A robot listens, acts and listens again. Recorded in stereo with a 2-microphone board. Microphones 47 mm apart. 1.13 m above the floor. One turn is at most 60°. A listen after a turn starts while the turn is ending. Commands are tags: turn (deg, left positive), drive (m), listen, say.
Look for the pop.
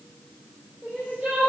<listen/>
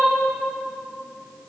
<listen/>
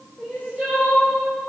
<say>I can't make out a pop to turn to.</say>